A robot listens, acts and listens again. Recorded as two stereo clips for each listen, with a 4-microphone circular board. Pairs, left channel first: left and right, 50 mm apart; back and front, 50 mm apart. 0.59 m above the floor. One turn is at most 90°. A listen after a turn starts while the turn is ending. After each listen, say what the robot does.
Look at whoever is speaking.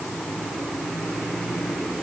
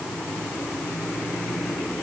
Keep listening.
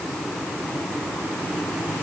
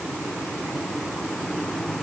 Keep listening.
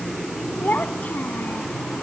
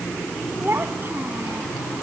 Turn 35° left.
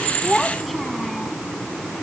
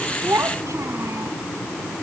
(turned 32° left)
Facing the child speaking.